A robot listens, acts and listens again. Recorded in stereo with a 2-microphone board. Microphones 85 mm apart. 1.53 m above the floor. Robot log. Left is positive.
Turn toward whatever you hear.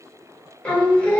note: The singing: about 15° left or 165° left.
cmd yaw +15
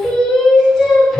end: Facing the singing, 1 to 2 m away.